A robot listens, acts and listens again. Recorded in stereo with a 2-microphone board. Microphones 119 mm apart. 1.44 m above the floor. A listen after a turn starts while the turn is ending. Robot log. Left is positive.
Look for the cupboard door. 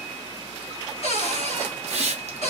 note: The cupboard door: about 60° left or 120° left.
cmd yaw +60
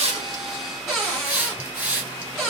end: Found it: a cupboard door, straight ahead, 1 to 2 m away.